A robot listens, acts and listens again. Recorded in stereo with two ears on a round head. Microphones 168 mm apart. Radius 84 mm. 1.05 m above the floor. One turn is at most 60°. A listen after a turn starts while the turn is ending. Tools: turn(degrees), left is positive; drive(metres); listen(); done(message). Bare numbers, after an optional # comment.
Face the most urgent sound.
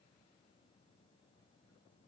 listen()
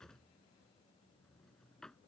listen()
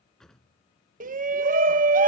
# The shout: about 45° right or 135° right.
turn(-45)
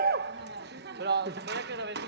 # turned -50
# So it is at 75° right.
turn(-60)
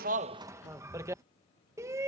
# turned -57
# The shout is now 20° right.
turn(-20)
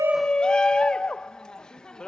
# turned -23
done("Found it: a shout, straight ahead.")